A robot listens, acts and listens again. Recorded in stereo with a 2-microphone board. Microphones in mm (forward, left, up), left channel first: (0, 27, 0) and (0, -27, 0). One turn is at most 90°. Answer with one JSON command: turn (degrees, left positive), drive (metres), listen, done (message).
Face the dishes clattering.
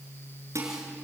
{"turn": -65}
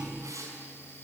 {"listen": true}
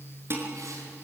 {"turn": -50}
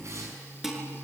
{"done": "Facing the dishes clattering, over 4 m away."}